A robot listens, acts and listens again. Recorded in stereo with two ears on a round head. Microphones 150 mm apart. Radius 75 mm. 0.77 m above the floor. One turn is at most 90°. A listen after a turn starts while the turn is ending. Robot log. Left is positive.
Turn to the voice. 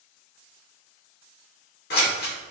cmd idle
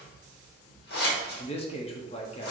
note: The man speaking: about 35° left or 145° left.
cmd yaw +35
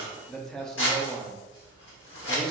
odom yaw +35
end: Found it: a man speaking, straight ahead.